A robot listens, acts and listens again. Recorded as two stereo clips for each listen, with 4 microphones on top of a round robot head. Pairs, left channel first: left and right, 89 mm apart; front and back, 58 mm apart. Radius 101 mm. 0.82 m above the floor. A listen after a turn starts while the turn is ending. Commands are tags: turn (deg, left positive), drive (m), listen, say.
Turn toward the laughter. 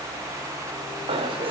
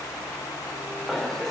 <turn deg="-80"/>
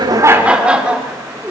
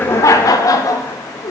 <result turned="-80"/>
<turn deg="-10"/>
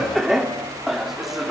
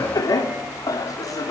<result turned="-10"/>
<say>Found it: laughter, straight ahead.</say>